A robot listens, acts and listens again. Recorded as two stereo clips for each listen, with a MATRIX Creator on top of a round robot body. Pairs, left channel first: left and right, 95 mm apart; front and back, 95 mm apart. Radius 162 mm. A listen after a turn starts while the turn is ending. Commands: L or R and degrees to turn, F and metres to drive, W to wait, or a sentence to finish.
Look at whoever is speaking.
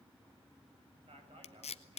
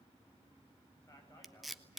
R60
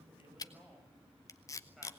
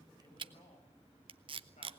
Facing the man speaking, over 4 m away.